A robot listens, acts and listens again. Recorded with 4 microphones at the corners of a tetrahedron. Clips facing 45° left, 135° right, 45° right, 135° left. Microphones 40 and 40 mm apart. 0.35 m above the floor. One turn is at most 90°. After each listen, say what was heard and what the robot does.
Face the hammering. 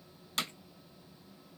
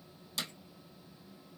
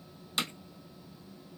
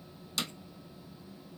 The hammering: 10° left. Turn 10° left.
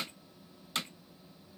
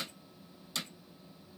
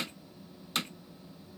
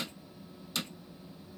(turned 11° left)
Found it: hammering, straight ahead, under 1 m away.